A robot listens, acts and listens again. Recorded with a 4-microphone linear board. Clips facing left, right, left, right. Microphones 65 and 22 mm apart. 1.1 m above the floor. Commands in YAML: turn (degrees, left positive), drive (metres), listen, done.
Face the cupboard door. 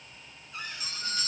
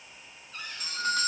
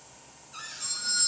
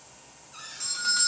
turn: 30
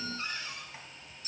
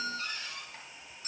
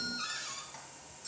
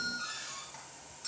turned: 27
turn: 140
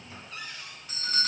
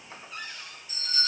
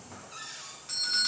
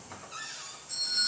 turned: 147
turn: -10
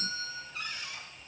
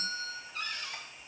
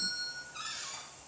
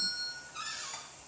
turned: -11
done: "Facing the cupboard door, over 4 m away."